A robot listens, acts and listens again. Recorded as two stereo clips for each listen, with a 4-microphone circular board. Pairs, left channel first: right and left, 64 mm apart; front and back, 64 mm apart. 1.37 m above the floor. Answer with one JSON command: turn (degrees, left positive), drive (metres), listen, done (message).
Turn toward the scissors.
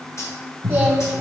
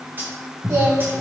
{"turn": 110}
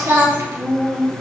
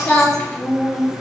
{"listen": true}
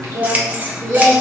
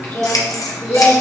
{"turn": 25}
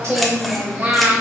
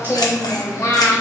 {"listen": true}
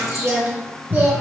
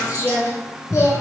{"done": "Found it: scissors, straight ahead, 1 to 2 m away."}